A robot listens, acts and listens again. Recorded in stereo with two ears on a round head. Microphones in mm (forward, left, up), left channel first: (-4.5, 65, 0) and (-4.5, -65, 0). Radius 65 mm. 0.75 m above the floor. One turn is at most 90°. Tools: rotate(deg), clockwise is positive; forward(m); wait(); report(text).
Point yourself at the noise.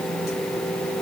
wait()
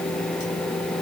wait()
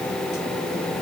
report("I can't make out anything.")